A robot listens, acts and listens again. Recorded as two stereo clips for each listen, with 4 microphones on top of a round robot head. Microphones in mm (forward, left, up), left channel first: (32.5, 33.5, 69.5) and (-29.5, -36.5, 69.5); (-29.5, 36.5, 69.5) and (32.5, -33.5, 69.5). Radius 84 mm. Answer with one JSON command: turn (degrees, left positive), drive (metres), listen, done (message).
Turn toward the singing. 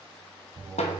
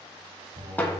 {"turn": -80}
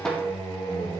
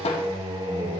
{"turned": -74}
{"turn": -15}
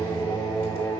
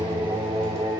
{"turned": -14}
{"done": "Found it: singing, straight ahead, 2 to 4 m away."}